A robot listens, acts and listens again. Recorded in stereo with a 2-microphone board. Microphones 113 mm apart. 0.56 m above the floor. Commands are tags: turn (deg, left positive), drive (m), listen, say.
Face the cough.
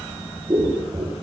<listen/>
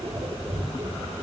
<listen/>
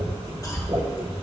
<turn deg="30"/>
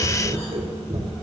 <listen/>
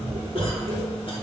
<listen/>
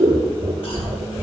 <turn deg="120"/>
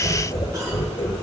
<turn deg="-35"/>
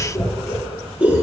<listen/>
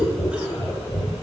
<listen/>
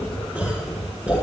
<say>Facing where the cough came from. I can't hear it now.</say>